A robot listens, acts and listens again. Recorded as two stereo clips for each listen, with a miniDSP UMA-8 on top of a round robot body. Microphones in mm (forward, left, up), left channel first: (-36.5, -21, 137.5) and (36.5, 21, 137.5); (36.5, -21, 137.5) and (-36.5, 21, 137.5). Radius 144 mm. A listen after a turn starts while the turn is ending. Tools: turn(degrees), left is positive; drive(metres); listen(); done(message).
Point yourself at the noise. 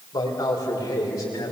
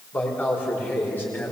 turn(degrees=-100)
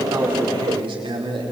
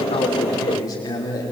turn(degrees=20)
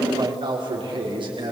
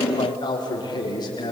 done("Facing the man speaking.")